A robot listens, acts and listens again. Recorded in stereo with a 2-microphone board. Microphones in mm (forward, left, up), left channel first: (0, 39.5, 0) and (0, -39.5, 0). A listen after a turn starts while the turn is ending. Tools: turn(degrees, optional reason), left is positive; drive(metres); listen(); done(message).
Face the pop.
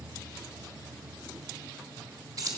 listen()
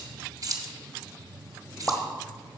turn(degrees=30)
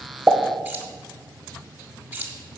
listen()
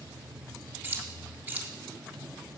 done("I heard a pop, but can't make it out now. It was about 15° right or 135° left.")